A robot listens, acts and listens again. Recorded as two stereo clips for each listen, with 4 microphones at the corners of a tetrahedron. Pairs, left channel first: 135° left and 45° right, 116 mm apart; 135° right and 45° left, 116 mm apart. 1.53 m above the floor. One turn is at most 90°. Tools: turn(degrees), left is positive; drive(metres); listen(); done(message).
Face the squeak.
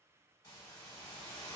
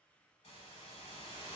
listen()
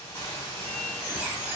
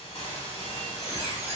turn(degrees=25)
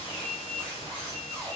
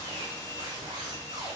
done("Facing the squeak.")